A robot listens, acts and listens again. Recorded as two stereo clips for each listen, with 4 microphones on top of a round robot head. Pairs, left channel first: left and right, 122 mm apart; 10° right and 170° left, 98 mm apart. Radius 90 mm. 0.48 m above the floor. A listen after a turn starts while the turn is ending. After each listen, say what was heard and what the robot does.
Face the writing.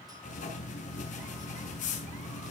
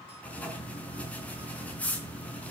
The writing: 65° left. Turn 65° left.
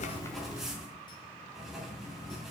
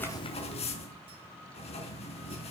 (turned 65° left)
Found it: writing, straight ahead, over 4 m away.